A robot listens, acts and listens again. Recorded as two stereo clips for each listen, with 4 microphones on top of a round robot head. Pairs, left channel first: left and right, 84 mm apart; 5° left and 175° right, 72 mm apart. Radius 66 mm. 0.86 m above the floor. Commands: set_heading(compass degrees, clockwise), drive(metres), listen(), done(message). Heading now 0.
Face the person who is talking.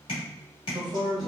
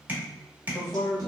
set_heading(80)
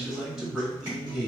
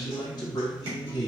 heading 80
done("Found it: a man speaking, straight ahead.")